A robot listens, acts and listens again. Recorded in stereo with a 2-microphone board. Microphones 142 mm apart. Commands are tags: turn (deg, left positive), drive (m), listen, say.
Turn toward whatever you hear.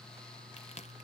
<turn deg="50"/>
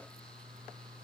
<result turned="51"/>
<listen/>
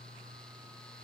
<say>I heard a crack, but can't make it out now. It was about straight ahead or 80° left.</say>